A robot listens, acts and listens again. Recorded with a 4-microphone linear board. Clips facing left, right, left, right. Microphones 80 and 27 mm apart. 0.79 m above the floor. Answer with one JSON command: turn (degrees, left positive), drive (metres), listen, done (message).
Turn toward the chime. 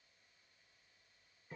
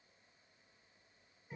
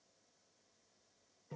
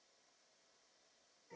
{"listen": true}
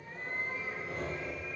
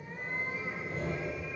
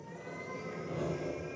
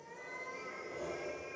{"listen": true}
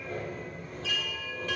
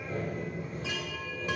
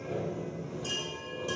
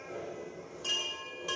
{"turn": -15}
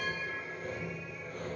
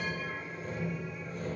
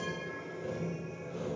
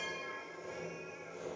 {"listen": true}
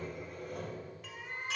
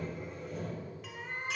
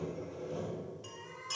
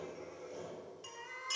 {"done": "Facing the chime, 1 to 2 m away."}